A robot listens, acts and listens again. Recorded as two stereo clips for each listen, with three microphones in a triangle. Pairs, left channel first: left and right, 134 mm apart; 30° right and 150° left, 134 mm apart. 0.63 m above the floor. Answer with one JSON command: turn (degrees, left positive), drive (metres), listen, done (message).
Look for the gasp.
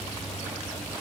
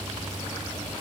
{"listen": true}
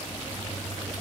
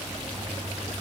{"listen": true}
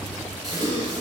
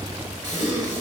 {"turn": -150}
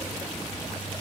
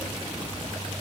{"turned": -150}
{"done": "I heard a gasp from this way, but can't make it out now."}